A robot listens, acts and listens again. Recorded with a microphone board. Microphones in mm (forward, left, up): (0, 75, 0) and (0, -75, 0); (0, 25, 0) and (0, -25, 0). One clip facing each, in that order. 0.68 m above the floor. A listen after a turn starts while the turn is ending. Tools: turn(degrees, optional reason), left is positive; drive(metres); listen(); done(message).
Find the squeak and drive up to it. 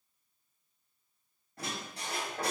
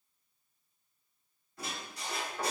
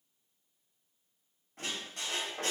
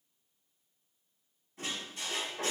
turn(degrees=55, reason="The squeak: about 55° left or 125° left.")
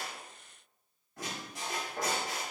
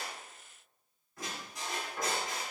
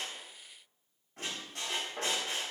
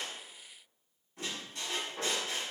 turn(degrees=75, reason="So it is at 75° left.")
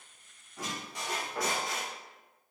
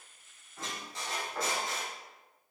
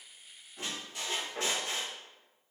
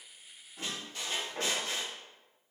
turn(degrees=15, reason="The squeak is now 15° left.")
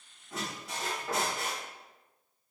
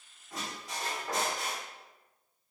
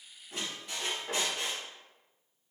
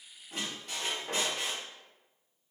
drive(metres=1.0)
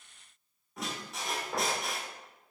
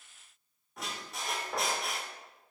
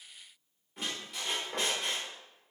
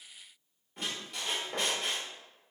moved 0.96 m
drive(metres=1.0)
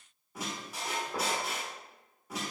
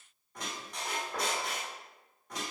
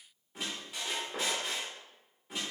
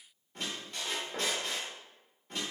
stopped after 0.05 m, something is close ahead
done("Arrived at the squeak, straight ahead.")